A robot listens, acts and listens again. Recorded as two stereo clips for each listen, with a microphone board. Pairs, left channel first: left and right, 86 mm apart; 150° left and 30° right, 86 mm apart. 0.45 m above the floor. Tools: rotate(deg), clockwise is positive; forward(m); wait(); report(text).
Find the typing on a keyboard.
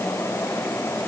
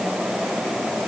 wait()
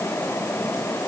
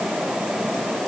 wait()
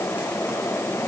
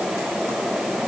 report("I can't make out typing on a keyboard.")